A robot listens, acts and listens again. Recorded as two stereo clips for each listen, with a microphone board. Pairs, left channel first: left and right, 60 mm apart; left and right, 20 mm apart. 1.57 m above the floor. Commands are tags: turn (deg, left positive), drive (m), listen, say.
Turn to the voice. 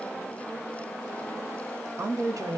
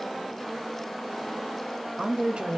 <turn deg="-65"/>
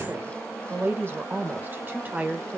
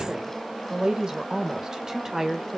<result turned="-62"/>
<turn deg="-25"/>
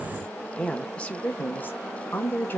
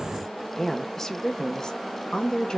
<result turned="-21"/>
<turn deg="30"/>
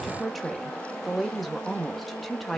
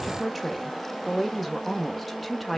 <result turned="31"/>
<say>Facing the woman speaking.</say>